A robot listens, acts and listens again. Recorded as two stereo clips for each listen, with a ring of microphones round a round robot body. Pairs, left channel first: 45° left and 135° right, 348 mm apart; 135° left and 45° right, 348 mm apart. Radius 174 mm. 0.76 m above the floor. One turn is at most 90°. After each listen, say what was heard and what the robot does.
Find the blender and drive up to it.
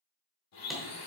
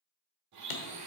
Drive 1.0 m forward.
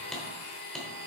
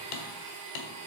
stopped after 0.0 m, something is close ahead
Blocked. The blender is further on, straight ahead.